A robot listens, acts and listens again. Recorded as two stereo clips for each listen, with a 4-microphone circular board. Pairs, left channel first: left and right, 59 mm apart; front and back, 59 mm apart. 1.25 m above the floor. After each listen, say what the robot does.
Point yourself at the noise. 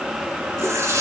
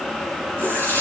Turn 55° right.
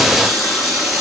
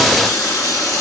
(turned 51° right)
Facing the running tap.